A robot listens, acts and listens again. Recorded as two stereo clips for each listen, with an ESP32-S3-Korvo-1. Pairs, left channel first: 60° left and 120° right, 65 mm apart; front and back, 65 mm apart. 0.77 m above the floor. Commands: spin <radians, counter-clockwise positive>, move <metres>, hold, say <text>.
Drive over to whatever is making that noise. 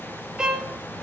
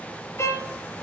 spin -0.70
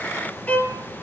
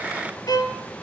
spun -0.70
spin -0.17
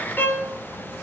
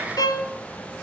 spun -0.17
move 1.0
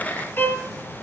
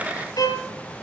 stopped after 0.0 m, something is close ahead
say Blocked. The violin is further on, straight ahead.